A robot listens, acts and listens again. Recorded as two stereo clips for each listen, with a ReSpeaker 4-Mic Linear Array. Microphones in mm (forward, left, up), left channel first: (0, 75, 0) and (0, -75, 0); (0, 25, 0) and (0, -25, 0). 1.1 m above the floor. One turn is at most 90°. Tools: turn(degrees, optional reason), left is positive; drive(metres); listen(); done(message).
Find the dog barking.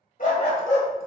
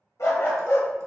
turn(degrees=60, reason="The dog barking: about 60° left or 120° left.")
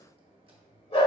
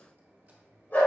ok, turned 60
turn(degrees=40, reason="So it is at 40° left.")
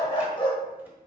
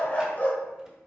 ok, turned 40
turn(degrees=40, reason="The dog barking is now 40° left.")
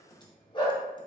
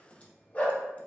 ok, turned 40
turn(degrees=35, reason="The dog barking is now 35° left.")
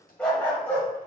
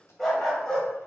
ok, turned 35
turn(degrees=10, reason="The dog barking is now 10° left.")
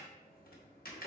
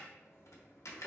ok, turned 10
listen()
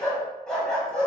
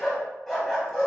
done("Facing the dog barking, 2 to 4 m away.")